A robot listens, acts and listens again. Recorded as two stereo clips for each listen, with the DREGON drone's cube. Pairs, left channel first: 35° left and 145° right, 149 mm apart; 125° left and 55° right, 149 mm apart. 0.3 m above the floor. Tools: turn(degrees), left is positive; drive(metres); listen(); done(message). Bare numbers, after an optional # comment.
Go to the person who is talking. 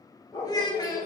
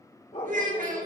# The child speaking: 30° right.
turn(-30)
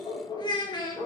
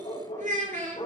# The child speaking is now 25° right.
turn(-25)
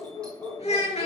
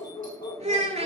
# The child speaking is now 10° right.
turn(-10)
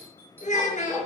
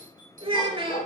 drive(1.0)
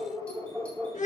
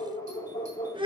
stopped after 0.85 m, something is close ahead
done("Something is in my way. I am facing the child speaking but have not reached it.")